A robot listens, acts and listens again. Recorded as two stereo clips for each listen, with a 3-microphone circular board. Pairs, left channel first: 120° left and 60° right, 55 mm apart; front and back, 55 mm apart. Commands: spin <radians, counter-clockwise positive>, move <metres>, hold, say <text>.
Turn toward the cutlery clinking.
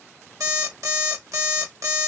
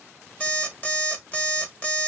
hold
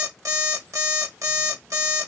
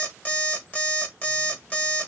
hold
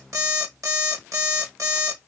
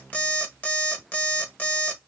say I can't make out cutlery clinking to turn to.